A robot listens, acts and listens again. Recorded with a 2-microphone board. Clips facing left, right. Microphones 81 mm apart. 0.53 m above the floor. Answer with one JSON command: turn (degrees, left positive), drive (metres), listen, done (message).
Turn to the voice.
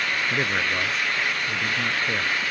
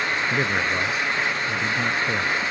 {"turn": -30}
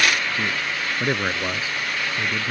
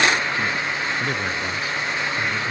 {"turn": 25}
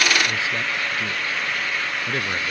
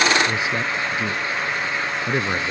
{"turn": -15}
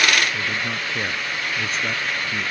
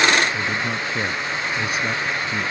{"done": "Facing the man speaking."}